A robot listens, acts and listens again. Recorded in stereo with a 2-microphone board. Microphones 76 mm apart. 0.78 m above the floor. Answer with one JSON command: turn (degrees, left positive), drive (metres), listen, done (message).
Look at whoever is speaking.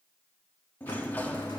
{"listen": true}
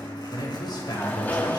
{"turn": 70}
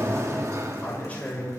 {"turn": 25}
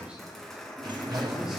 {"turn": -10}
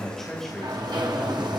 {"done": "Facing the man speaking, 2 to 4 m away."}